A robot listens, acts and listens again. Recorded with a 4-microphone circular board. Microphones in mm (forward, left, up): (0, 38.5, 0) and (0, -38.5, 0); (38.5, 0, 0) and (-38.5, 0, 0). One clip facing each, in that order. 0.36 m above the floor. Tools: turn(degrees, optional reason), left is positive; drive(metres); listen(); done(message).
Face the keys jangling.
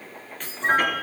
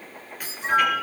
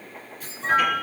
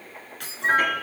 turn(degrees=-170, reason="The keys jangling: 170° right.")
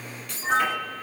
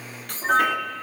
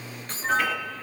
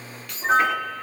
turn(degrees=-55, reason="The keys jangling is now 55° right.")
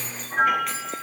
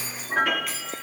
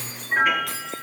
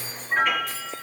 listen()
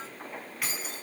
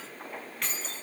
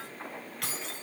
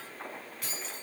turn(degrees=10, reason="The keys jangling is now 10° left.")
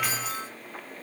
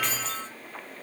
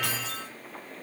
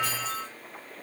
listen()
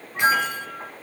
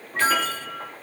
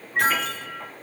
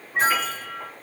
listen()
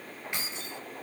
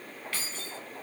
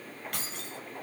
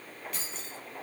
turn(degrees=20, reason="The keys jangling is now 20° left.")
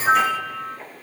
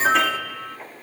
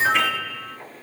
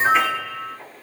listen()
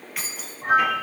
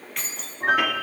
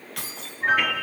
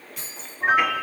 done("Facing the keys jangling, 1 to 2 m away.")